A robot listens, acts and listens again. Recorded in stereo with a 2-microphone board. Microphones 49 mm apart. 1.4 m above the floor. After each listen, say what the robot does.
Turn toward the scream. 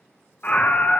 Turn 30° left.
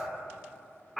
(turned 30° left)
Found it: a scream, straight ahead.